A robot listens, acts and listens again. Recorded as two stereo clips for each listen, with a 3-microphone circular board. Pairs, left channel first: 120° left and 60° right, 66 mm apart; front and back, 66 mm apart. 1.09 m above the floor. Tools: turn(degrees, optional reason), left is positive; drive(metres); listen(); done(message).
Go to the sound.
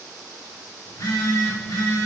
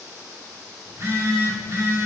turn(degrees=140, reason="The phone buzzing: 140° left.")
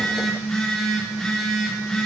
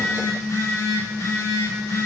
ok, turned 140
turn(degrees=40, reason="The phone buzzing is now 40° left.")
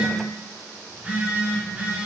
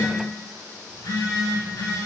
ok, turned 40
turn(degrees=10, reason="The phone buzzing is now 10° left.")
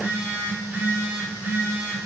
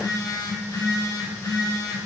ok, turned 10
drive(metres=1.0)
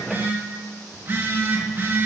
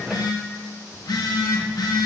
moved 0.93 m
drive(metres=1.0)
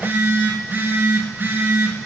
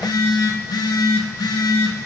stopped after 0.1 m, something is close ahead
done("Arrived at the phone buzzing, straight ahead.")